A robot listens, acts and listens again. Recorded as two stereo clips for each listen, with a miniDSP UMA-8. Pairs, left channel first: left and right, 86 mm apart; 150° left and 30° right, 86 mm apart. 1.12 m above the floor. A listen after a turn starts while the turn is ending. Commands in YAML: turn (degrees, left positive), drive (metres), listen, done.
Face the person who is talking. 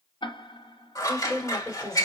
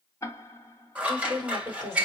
turn: 10
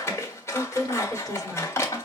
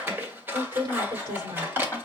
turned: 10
done: "Found it: a woman speaking, straight ahead."